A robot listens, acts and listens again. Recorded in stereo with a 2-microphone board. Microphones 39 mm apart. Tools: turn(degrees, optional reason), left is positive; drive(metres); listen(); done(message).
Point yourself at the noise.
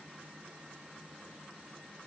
listen()
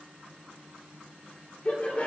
turn(degrees=40, reason="The laughter: about 40° left or 140° left.")
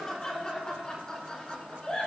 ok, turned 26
turn(degrees=30, reason="The laughter: about 30° left or 150° left.")
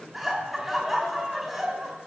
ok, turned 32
done("Facing the laughter, over 4 m away.")